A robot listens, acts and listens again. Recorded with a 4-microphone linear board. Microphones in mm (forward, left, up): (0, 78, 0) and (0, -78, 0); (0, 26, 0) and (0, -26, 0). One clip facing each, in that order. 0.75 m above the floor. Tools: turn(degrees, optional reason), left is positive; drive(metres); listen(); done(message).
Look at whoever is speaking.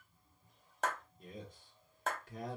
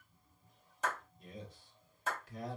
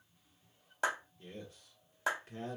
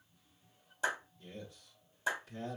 turn(degrees=50, reason="The man speaking: about 50° left or 130° left.")
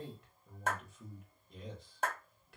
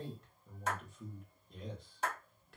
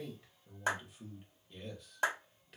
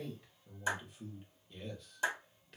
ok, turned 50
done("Found it: a man speaking, straight ahead, 1 to 2 m away.")